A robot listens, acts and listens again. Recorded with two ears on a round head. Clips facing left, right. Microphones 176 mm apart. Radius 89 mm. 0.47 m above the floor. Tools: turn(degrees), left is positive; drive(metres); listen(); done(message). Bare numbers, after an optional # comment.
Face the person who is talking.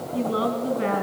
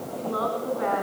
# The woman speaking: about 35° left or 145° left.
turn(35)
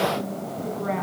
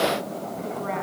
done("Facing the woman speaking.")